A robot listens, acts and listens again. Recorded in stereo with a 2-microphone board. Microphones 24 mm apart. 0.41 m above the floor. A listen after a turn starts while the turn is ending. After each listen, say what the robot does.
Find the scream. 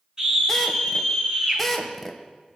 Turn 25° right.
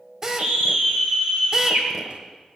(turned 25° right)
Turn 125° right.
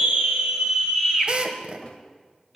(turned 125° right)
Turn 10° right.
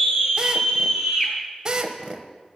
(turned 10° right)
Found it: a scream, straight ahead.